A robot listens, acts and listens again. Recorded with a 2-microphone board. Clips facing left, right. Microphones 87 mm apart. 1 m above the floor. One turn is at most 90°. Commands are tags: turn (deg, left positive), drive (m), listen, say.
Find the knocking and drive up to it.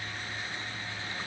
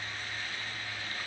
<listen/>
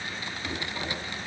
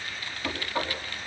<turn deg="-60"/>
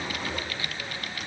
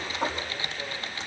<turn deg="-60"/>
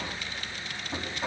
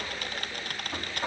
<drive m="1.0"/>
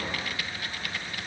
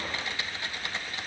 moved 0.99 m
<listen/>
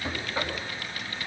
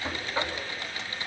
<drive m="1.0"/>
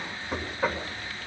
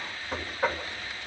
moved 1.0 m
<drive m="1.0"/>
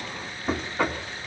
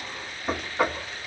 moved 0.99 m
<drive m="1.0"/>
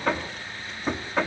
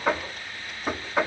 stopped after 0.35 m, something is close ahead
<turn deg="-10"/>
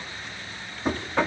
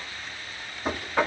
<say>I am next to the knocking.</say>